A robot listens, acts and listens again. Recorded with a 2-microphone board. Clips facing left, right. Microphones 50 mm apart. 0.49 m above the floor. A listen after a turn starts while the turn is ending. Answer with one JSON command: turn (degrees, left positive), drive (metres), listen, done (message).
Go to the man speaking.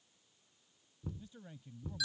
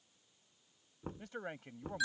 {"turn": -60}
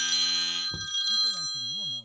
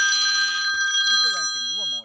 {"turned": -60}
{"listen": true}
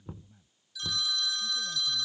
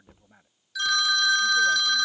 {"turn": -55}
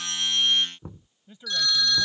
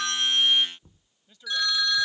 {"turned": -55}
{"turn": 15}
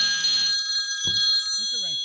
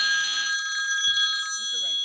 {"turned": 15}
{"listen": true}
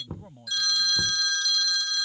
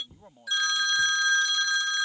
{"drive": 1.0}
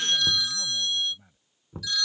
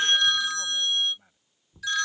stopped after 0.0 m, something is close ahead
{"done": "Blocked. The man speaking is further on, straight ahead."}